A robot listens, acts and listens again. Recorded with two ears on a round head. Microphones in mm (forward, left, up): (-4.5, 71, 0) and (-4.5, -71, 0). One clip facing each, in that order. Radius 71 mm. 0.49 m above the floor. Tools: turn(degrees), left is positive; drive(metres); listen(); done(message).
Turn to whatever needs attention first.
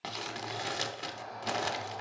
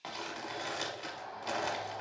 turn(degrees=65)
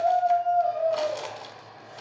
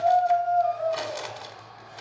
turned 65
turn(degrees=30)
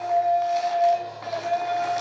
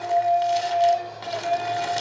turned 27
done("Found it: a shout, straight ahead.")